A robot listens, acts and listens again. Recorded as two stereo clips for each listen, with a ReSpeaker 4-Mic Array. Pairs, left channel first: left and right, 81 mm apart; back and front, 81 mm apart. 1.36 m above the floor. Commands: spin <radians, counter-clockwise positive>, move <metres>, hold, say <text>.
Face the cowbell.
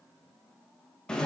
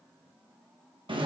hold
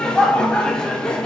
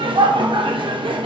hold
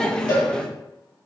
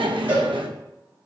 spin 1.13
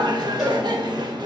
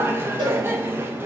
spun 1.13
hold
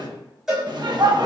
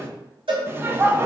say Facing the cowbell.